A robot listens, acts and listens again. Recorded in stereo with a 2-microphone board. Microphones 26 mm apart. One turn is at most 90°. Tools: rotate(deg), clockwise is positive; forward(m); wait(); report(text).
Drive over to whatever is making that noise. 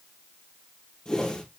rotate(-25)
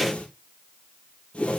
rotate(-90)
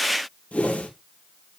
rotate(-60)
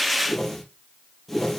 rotate(-10)
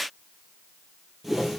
forward(1.0)
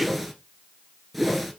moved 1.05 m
forward(1.0)
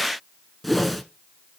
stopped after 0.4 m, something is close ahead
report("Arrived at the whoosh, straight ahead.")